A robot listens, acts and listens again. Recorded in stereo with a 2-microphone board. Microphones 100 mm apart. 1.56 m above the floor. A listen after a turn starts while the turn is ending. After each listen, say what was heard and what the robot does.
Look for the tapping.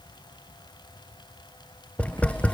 Turn 30° left.
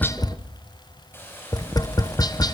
So it is at 140° left. Turn 140° left.
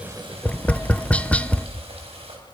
The tapping is now 15° left. Turn 15° left.
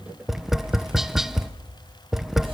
Found it: tapping, straight ahead.